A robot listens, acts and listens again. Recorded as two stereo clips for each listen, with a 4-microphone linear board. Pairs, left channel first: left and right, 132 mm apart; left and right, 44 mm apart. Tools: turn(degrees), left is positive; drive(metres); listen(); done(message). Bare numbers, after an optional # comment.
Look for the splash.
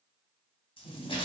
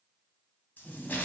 # The splash: about 45° left or 135° left.
turn(45)
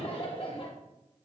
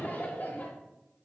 listen()
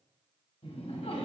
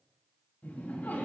done("I heard a splash, but can't make it out now. It was about straight ahead or 90° left.")